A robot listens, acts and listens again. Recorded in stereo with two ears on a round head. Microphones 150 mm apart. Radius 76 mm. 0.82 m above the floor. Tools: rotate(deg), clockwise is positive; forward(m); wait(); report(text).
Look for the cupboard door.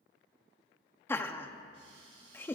rotate(40)
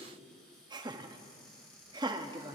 report("Facing the cupboard door.")